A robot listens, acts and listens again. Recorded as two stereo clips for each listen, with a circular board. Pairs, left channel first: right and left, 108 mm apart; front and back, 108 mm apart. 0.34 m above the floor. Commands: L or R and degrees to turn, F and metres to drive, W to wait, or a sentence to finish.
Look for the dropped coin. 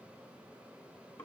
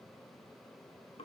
W
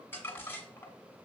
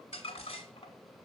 W
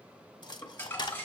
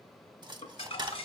R135
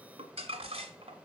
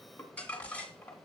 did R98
R35
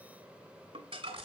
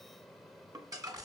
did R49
L10
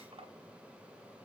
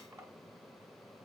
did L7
Facing where the dropped coin came from. I can't hear it now.